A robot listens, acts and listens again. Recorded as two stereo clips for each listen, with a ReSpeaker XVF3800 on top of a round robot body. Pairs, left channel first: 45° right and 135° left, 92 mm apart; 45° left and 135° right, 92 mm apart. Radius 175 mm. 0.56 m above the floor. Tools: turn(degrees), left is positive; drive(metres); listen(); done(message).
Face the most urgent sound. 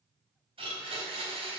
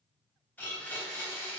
listen()
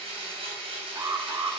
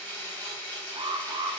turn(degrees=-170)
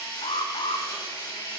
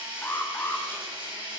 turn(degrees=-25)
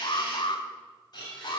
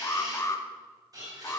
turn(degrees=-10)
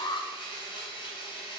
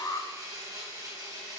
done("Facing the alarm.")